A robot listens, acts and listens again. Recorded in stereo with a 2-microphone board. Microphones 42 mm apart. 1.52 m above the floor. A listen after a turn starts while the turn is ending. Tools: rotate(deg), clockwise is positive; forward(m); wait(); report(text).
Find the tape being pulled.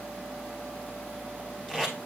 rotate(-20)
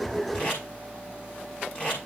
rotate(-140)
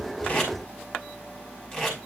report("Facing the tape being pulled, over 4 m away.")